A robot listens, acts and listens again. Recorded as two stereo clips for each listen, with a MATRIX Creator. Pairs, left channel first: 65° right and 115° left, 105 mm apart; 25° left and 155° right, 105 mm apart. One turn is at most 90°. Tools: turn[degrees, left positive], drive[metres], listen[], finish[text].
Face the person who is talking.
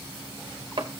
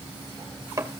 Action: listen[]
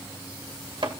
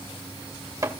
Action: listen[]
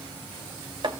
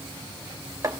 Action: finish[I can't make out anyone speaking, only chopping.]